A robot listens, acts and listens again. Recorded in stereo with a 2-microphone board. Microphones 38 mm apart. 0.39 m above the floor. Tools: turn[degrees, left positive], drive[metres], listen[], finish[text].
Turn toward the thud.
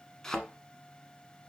Action: turn[30]
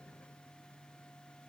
Action: listen[]
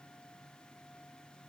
Action: finish[I heard a thud, but can't make it out now. It was about 15° right or 135° left.]